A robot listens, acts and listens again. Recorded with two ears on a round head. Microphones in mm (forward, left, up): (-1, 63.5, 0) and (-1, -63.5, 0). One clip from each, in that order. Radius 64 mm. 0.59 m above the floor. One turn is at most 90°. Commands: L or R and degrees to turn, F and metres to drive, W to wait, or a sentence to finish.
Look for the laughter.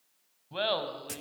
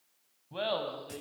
L30
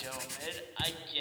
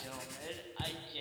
L90
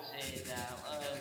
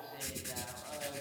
L60
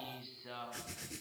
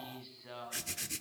Facing the laughter.